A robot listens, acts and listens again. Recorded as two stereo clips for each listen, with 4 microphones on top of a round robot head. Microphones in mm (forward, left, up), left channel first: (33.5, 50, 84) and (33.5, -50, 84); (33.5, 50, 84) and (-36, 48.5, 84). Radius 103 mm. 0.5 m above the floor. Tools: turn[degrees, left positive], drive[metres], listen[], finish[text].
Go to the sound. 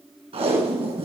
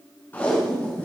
Thought: The tape being pulled: 65° right.
Action: turn[-65]
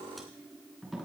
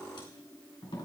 Action: drive[1.0]
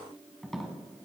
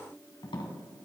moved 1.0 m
Action: drive[1.0]
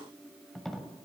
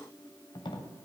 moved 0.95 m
Action: drive[1.0]
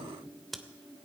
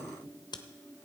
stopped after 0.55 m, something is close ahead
Action: listen[]
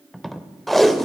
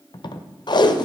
Action: finish[Arrived at the tape being pulled, straight ahead.]